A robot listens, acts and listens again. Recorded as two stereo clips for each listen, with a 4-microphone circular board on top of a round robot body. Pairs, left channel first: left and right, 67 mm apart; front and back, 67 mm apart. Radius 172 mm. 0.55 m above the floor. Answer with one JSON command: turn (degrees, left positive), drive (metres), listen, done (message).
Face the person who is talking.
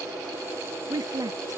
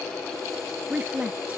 {"turn": -110}
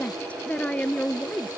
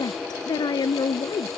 {"turn": 20}
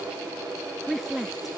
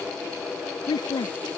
{"done": "Facing the woman speaking."}